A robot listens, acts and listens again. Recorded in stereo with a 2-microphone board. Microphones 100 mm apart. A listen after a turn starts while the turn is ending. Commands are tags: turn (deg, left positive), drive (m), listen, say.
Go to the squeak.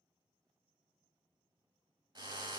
<listen/>
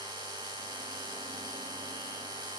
<listen/>
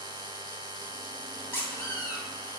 <turn deg="25"/>
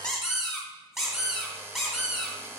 <drive m="1.0"/>
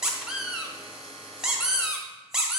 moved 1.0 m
<drive m="1.0"/>
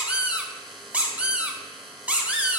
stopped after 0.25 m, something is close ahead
<turn deg="-10"/>
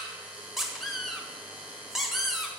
<say>Arrived at the squeak, straight ahead.</say>